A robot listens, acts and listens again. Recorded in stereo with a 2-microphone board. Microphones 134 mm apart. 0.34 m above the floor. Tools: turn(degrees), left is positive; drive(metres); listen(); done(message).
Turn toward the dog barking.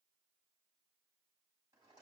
listen()
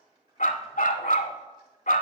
turn(degrees=90)
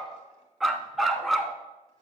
done("Found it: a dog barking, straight ahead, under 1 m away.")